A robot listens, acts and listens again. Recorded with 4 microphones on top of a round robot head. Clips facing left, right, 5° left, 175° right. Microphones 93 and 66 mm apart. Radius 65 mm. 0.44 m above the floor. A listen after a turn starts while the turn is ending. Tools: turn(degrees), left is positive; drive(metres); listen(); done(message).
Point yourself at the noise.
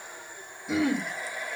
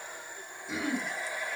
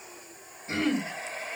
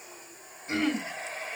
turn(degrees=95)
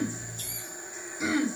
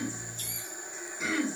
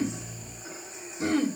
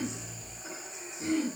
turn(degrees=10)
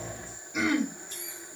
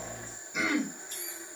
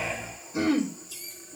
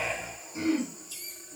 done("Facing the throat clearing, 2 to 4 m away.")